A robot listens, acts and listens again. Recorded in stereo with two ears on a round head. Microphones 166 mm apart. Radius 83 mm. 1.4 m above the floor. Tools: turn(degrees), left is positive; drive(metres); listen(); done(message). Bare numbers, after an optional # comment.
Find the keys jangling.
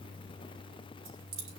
turn(-90)
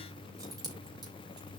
# So it is at 20° right.
turn(-20)
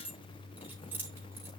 # The keys jangling is now 10° right.
turn(-10)
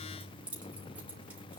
done("Facing the keys jangling, over 4 m away.")